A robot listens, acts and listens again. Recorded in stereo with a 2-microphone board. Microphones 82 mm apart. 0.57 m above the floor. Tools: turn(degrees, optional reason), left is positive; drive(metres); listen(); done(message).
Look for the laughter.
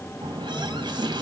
listen()
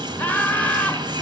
turn(degrees=20, reason="The laughter: about 20° left or 160° left.")
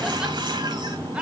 turn(degrees=-15, reason="So it is at 15° right.")
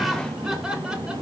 turn(degrees=-10, reason="The laughter is now 10° right.")
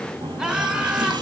turn(degrees=-10, reason="The laughter is now 10° right.")
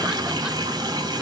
listen()
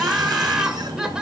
turn(degrees=-10, reason="The laughter is now 10° right.")
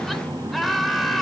done("Found it: laughter, straight ahead.")